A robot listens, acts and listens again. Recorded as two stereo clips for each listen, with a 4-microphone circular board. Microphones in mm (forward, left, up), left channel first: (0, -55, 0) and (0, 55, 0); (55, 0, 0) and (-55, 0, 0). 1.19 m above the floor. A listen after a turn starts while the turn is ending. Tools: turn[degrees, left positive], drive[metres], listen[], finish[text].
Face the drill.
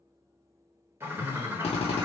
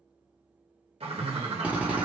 Thought: The drill: 100° right.
Action: turn[-100]
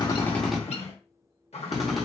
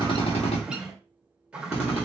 Action: finish[Found it: a drill, straight ahead.]